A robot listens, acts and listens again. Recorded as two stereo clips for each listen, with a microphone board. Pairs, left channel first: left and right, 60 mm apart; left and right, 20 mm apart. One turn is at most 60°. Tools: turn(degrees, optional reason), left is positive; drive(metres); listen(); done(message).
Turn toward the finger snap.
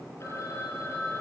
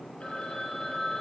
listen()
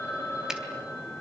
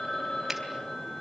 turn(degrees=-30)
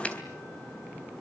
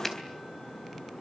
listen()
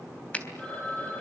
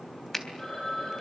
turn(degrees=20, reason="So it is at 20° left.")
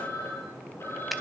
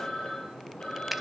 listen()
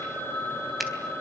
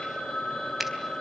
done("Found it: a finger snap, straight ahead.")